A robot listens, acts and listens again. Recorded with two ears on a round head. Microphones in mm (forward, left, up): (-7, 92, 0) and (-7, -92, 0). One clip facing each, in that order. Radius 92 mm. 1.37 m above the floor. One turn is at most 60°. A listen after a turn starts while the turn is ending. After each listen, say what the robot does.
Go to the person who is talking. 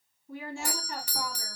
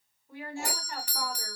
Turn 15° left.
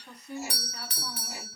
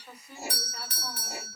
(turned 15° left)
Drive 1.0 m forward.
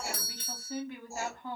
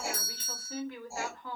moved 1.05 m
Turn 15° left.
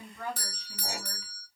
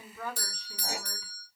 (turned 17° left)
Drive 1.0 m forward.
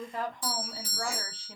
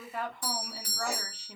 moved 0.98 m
Drive 1.0 m forward.
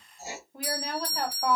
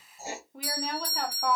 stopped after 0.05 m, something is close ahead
I am next to the woman speaking.